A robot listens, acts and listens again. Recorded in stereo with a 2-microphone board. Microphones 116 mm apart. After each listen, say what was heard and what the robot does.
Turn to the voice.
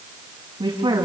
The woman speaking: about 45° right or 135° right. Turn 45° right.
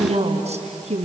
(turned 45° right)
So it is at 80° right. Turn 80° right.
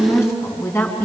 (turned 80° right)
The woman speaking is now 25° left. Turn 25° left.
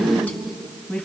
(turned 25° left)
The woman speaking is now 15° left. Turn 15° left.
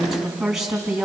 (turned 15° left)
Facing the woman speaking, 2 to 4 m away.